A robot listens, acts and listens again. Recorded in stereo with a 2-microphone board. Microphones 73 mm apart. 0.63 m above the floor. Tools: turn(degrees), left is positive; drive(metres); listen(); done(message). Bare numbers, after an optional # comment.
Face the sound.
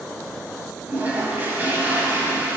# The toilet flushing: about 25° right or 155° right.
turn(-25)
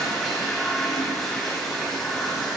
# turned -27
done("Facing the toilet flushing, 1 to 2 m away.")